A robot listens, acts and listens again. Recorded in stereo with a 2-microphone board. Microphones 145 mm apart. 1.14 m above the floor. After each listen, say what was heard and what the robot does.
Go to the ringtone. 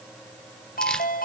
Turn 90° left.
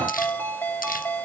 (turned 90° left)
So it is at 10° left. Turn 10° left.
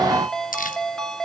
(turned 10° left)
Drive 1.0 m forward.
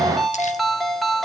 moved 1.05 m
Drive 1.0 m forward.
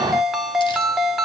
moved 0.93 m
Drive 1.0 m forward.
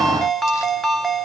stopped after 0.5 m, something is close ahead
I am next to the ringtone.